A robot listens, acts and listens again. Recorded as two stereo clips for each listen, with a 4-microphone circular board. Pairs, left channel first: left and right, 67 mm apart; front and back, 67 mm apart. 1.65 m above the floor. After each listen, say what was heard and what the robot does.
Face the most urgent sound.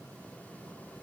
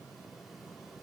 Keep listening.
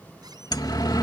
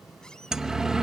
The siren: 100° left. Turn 100° left.
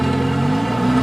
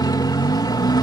Found it: a siren, straight ahead.